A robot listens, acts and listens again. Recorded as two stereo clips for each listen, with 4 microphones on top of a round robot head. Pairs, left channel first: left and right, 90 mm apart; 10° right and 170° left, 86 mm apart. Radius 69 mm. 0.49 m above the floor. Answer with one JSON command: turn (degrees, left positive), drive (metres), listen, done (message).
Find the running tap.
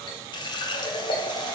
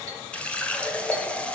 {"turn": 65}
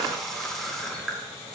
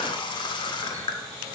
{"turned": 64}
{"done": "Found it: a running tap, straight ahead, under 1 m away."}